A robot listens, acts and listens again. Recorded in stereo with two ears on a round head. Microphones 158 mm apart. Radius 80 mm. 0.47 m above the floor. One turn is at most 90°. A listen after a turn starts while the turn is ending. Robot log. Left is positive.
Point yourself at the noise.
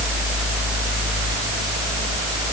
cmd idle
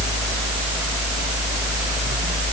cmd idle
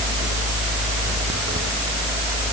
end: I can't make out anything to turn to.